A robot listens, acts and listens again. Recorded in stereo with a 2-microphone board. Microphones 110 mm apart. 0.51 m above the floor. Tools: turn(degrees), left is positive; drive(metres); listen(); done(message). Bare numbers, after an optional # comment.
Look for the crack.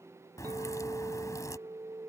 # The crack: about 30° left or 150° left.
turn(30)
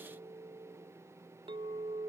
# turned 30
listen()
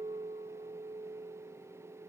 done("I heard a crack, but can't make it out now. It was about straight ahead or 120° left.")